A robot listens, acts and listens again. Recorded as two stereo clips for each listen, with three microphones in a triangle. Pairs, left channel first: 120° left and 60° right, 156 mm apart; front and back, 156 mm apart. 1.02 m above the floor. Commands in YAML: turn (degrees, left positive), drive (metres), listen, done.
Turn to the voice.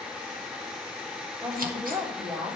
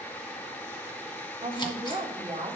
turn: -120
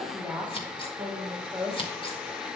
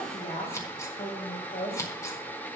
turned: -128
turn: 20
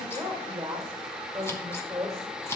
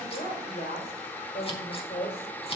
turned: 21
done: "Facing the woman speaking."